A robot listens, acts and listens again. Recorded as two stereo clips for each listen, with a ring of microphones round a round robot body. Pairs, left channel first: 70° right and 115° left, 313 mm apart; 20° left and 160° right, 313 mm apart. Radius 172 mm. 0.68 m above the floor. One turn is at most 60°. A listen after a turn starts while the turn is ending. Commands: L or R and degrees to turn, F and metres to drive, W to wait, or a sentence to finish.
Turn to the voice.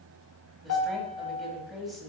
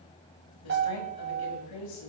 L20
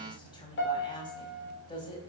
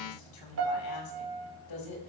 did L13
L10
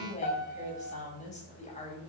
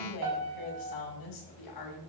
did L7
Facing the woman speaking.